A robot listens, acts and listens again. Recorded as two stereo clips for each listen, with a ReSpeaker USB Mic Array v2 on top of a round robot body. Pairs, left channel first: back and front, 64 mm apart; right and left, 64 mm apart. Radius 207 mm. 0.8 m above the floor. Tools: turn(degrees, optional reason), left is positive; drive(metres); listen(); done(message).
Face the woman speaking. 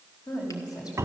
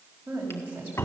turn(degrees=155, reason="The woman speaking: 155° left.")
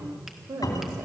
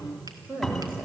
turn(degrees=20, reason="The woman speaking is now 20° left.")
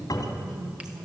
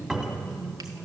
turn(degrees=10, reason="The woman speaking is now 10° left.")
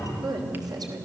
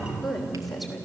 done("Found it: a woman speaking, straight ahead.")